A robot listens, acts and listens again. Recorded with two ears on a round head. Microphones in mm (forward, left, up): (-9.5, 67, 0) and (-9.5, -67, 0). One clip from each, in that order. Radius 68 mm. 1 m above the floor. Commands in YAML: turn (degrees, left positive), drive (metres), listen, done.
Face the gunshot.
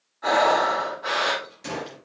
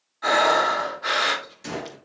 turn: -30
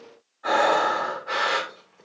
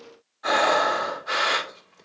listen: true
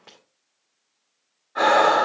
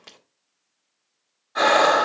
done: "I heard a gunshot, but can't make it out now. It was about 20° left or 140° right."